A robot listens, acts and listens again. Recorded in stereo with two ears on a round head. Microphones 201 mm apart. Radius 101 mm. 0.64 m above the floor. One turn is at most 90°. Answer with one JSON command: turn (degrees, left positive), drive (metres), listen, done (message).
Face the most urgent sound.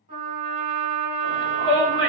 {"turn": -60}
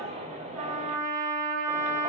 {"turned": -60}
{"turn": -35}
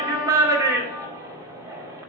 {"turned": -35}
{"turn": -15}
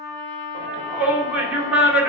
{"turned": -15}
{"done": "Found it: a shout, straight ahead, 2 to 4 m away."}